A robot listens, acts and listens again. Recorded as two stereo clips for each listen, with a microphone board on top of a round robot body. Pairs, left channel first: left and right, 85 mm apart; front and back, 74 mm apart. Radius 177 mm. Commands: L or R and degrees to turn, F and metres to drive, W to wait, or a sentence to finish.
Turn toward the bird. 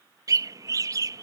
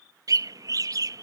R140
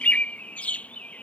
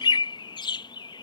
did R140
L15
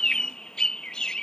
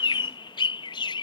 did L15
L10
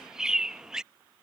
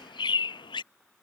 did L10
Found it: a bird, straight ahead.